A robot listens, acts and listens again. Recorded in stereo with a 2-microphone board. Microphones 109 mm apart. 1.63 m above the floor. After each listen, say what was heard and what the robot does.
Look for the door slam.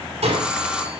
Turn 90° right.
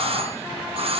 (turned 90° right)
I heard a door slam from this way, but can't make it out now.